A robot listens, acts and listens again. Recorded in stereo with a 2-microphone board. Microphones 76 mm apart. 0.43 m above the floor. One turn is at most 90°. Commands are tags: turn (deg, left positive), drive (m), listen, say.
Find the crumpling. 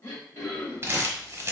<turn deg="-35"/>
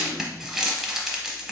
<say>Found it: crumpling, straight ahead.</say>